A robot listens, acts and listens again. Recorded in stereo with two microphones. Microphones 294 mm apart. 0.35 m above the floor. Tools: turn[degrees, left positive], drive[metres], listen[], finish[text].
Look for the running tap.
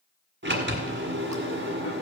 Action: listen[]
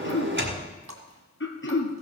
Thought: The running tap: about 65° right or 115° right.
Action: turn[-65]
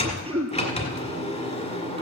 Action: listen[]
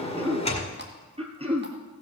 Action: listen[]
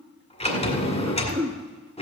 Action: finish[I heard a running tap, but can't make it out now. It was about straight ahead or 50° right.]